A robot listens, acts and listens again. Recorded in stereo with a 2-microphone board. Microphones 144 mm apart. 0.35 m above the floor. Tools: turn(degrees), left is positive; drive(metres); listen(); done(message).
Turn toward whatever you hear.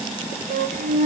turn(degrees=-90)
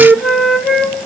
done("Facing the flute.")